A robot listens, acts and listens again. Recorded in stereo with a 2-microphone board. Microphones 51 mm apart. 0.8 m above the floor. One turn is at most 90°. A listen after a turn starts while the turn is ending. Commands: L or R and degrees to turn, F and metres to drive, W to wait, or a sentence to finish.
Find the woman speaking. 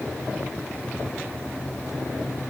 W
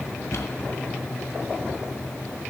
W
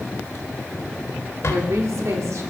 R75
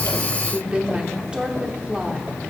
R20
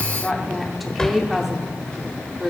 Facing the woman speaking, 1 to 2 m away.